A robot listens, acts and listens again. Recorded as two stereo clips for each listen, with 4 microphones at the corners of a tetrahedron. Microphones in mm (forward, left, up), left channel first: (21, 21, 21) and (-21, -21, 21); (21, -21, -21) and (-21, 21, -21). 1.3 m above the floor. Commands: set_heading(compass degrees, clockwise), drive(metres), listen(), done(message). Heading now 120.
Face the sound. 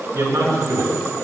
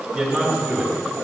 set_heading(245)
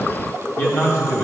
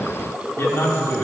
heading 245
done("Facing the man speaking, 2 to 4 m away.")